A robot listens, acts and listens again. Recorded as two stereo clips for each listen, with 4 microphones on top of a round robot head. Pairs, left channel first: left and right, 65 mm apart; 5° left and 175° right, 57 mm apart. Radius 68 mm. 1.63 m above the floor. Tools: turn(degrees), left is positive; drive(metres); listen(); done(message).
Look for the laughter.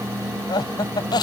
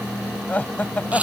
turn(degrees=70)
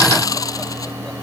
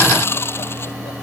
listen()
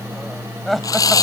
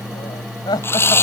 done("Found it: laughter, straight ahead.")